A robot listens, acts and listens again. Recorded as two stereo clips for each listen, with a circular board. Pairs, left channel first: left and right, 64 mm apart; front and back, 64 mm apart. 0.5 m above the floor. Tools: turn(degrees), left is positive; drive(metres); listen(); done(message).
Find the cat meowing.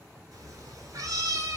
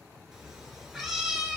turn(degrees=-95)
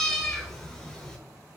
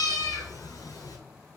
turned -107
turn(degrees=15)
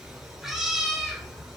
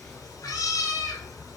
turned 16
done("Found it: a cat meowing, straight ahead.")